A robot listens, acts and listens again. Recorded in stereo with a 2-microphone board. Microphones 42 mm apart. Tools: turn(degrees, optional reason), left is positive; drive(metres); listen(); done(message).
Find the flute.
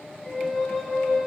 turn(degrees=30)
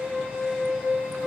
turn(degrees=-25, reason="So it is at 25° right.")
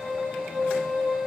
done("Found it: a flute, straight ahead, over 4 m away.")